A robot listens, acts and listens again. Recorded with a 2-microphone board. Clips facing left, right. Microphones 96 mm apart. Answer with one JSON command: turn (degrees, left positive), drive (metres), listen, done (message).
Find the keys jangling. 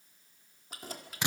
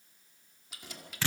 {"turn": 40}
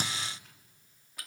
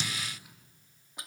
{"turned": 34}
{"turn": -20}
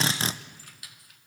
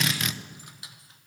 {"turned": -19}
{"turn": -25}
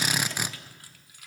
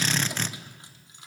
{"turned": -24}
{"turn": -25}
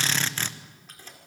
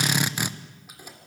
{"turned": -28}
{"turn": -10}
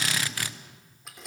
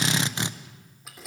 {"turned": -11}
{"done": "Found it: keys jangling, straight ahead, 2 to 4 m away."}